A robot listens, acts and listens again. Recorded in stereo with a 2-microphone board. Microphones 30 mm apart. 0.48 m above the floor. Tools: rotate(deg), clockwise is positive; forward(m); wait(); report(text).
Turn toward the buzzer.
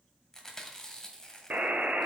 rotate(65)
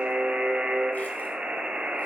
rotate(50)
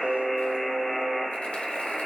report("Facing the buzzer.")